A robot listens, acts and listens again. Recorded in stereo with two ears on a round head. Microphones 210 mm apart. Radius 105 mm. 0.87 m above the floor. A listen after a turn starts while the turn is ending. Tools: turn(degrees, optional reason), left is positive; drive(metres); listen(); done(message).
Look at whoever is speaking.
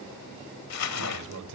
turn(degrees=-90)
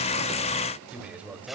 done("Facing the man speaking, 2 to 4 m away.")